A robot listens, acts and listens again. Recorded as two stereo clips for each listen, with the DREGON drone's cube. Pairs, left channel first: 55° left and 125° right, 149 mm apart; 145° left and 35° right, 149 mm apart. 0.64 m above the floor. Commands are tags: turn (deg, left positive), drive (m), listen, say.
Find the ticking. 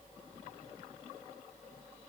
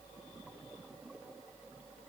<listen/>
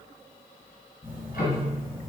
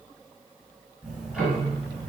<turn deg="55"/>
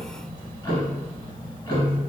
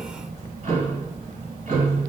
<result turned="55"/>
<turn deg="-10"/>
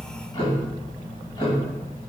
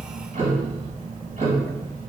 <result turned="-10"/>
<say>Found it: ticking, straight ahead, 1 to 2 m away.</say>